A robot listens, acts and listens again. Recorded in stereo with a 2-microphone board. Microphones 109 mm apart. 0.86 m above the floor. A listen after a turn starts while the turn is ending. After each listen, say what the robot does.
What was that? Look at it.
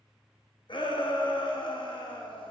Turn 50° left.
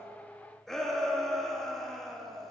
Found it: a shout, straight ahead, 1 to 2 m away.